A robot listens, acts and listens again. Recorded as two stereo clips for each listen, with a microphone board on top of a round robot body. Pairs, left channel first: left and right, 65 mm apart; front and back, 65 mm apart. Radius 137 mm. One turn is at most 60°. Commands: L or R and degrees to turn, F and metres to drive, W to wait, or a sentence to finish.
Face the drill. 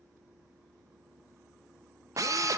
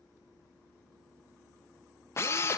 R55
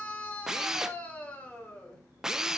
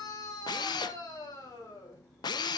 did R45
Found it: a drill, straight ahead, under 1 m away.